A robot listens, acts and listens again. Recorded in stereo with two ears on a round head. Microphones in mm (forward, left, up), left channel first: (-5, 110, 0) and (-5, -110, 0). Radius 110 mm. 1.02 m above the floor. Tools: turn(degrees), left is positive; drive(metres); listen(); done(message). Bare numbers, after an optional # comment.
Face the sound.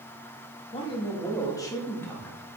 turn(30)
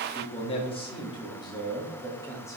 turn(30)
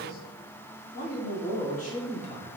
# So it is at 150° left.
turn(150)
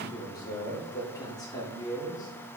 # The man speaking is now 15° left.
turn(15)
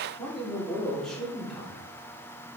done("Facing the man speaking, 2 to 4 m away.")